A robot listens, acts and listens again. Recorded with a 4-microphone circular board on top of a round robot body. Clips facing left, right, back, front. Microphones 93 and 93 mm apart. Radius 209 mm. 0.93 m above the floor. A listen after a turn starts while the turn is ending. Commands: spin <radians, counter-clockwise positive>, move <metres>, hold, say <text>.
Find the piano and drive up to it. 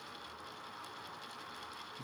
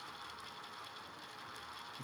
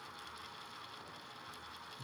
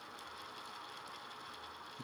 hold
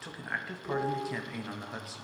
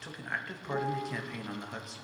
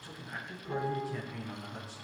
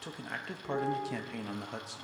spin 1.48
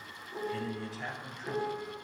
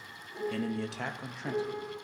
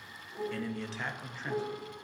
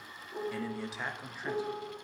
move 1.0
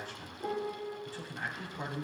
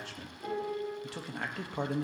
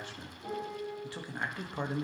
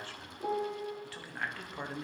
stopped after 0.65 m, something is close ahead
say Blocked. The piano is further on, straight ahead.